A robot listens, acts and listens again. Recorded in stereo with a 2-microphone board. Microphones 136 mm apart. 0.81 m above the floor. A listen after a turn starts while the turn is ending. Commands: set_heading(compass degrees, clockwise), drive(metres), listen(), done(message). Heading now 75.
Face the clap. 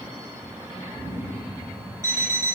listen()
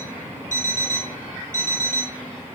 listen()
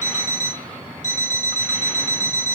done("I can't make out a clap to turn to.")